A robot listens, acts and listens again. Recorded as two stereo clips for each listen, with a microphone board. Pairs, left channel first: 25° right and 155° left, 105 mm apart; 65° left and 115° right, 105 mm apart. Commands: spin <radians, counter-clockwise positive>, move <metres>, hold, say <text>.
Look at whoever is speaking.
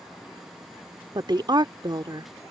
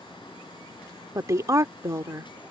spin -2.97
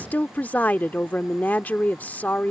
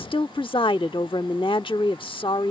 spin 0.87
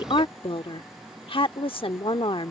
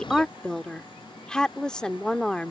spin -0.26
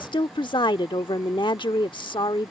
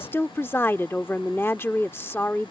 say Found it: a woman speaking, straight ahead.